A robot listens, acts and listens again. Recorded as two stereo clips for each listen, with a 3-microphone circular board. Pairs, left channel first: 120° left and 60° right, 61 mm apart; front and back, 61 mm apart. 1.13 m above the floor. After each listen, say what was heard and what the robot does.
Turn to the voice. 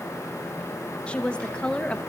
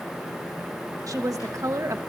The woman speaking: 170° right. Turn 170° right.
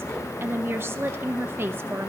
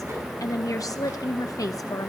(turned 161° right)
The woman speaking is now 10° right. Turn 10° right.
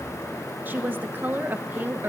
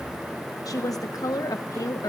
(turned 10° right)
Found it: a woman speaking, straight ahead.